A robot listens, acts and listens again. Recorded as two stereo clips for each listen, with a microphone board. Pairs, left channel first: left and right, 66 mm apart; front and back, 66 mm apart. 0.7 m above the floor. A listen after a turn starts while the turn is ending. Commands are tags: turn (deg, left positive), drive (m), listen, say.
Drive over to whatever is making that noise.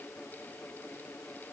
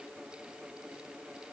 <listen/>
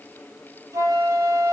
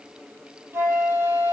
<turn deg="-125"/>
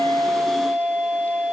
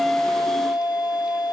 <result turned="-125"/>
<turn deg="-10"/>
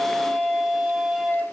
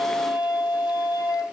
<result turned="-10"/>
<drive m="1.0"/>
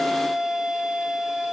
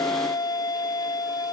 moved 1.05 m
<drive m="1.0"/>
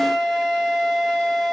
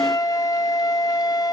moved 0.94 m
<drive m="1.0"/>
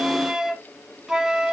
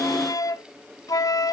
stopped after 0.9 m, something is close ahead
<turn deg="-10"/>
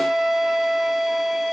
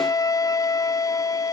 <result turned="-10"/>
<say>Arrived at the flute, straight ahead.</say>